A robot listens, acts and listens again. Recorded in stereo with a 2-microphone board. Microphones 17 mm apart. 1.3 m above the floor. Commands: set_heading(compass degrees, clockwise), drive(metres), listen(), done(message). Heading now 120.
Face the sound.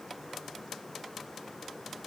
listen()
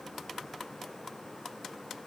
listen()
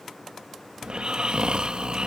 set_heading(185)
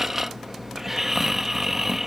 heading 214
set_heading(234)
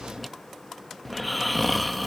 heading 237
done("Facing the snoring.")